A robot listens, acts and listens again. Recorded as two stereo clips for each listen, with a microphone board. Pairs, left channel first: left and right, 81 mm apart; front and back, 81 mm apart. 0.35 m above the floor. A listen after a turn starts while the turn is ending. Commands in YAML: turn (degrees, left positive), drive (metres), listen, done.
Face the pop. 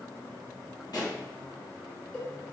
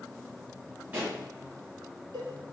turn: 120
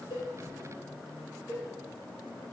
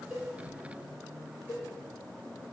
done: "I heard a pop from this way, but can't make it out now."